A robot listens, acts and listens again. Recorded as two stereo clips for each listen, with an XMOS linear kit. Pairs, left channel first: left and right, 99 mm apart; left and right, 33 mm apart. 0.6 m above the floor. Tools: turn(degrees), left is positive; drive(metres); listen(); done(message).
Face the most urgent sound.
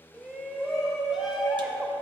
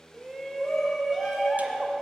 turn(degrees=-30)
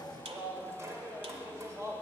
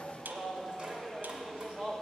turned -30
turn(degrees=-145)
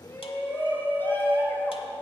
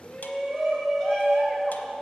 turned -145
turn(degrees=25)
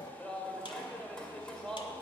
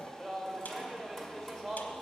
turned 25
turn(degrees=10)
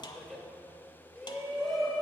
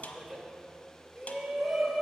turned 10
done("Found it: a shout, straight ahead, 2 to 4 m away.")